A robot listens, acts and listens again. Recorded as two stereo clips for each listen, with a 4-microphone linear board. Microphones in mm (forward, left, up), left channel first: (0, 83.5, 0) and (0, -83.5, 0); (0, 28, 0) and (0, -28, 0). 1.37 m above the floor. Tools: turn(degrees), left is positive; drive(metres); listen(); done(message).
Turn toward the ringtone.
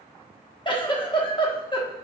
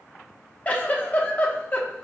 listen()
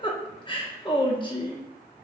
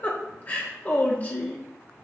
listen()
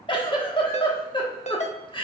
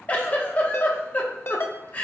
turn(degrees=45)
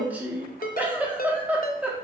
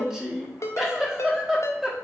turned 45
turn(degrees=85)
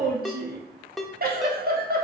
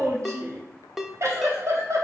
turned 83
done("Found it: a ringtone, straight ahead.")